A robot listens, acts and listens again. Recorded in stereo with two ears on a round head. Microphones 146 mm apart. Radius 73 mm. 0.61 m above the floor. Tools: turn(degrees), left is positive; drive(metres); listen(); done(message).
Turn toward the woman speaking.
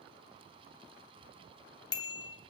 listen()
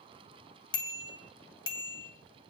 listen()
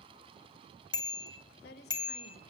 turn(degrees=70)
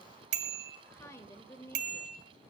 turn(degrees=15)
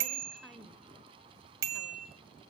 done("Found it: a woman speaking, straight ahead.")